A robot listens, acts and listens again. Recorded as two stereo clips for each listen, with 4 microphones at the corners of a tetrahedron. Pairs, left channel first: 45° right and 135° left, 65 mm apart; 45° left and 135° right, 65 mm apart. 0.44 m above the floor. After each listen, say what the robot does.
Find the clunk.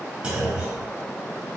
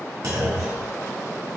Turn 155° right.
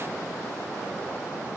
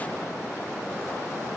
I heard a clunk from this way, but can't make it out now.